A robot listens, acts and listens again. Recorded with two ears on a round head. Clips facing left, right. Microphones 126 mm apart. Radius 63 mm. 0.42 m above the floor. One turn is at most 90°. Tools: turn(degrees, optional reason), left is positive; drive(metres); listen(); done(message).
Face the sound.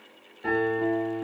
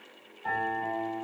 turn(degrees=90)
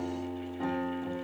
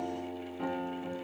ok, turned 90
done("Found it: a piano, straight ahead.")